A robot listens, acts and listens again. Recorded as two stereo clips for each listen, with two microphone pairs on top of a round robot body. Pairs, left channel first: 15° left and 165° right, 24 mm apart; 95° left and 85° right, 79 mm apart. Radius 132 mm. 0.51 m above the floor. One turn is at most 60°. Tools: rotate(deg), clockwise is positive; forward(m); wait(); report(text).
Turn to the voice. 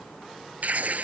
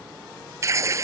wait()
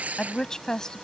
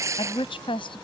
rotate(-60)
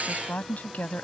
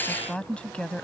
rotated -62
rotate(-15)
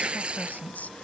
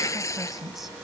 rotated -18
report("Found it: a woman speaking, straight ahead.")